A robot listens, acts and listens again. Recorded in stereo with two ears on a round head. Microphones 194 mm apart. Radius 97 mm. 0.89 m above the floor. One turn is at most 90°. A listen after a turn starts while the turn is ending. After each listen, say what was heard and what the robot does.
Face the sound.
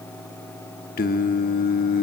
The singing: about 45° left or 135° left. Turn 45° left.
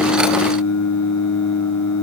So it is at 90° left. Turn 90° left.
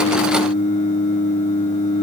The singing is now 35° left. Turn 35° left.
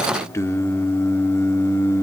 The singing is now 15° left. Turn 15° left.
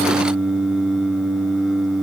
Found it: singing, straight ahead, 1 to 2 m away.